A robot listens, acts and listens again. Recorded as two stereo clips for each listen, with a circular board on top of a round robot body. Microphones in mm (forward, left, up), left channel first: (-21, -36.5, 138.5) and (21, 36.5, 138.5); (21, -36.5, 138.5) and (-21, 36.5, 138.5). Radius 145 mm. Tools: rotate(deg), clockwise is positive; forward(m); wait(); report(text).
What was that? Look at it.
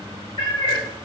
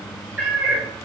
rotate(155)
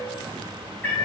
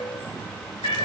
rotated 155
rotate(45)
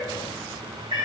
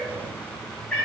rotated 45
rotate(-20)
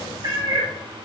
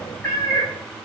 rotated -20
rotate(-10)
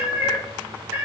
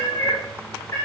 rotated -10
report("Found it: a cat meowing, straight ahead, 2 to 4 m away.")